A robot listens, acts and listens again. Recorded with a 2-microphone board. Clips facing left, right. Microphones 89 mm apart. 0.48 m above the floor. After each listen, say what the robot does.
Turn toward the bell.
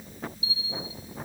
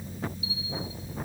Turn 30° left.
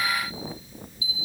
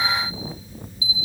Turn 15° right.
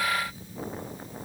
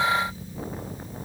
Keep listening.
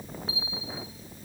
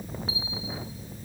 Facing the bell.